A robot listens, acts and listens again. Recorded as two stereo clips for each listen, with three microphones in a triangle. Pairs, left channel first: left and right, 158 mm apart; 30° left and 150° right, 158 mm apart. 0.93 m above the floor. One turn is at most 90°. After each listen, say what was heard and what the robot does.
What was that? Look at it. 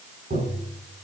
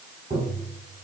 The tapping: 110° right. Turn 90° right.
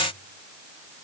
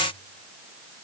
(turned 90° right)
Nothing new. It was at 20° right. Turn 20° right.
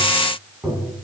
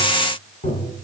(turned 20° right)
Facing the tapping.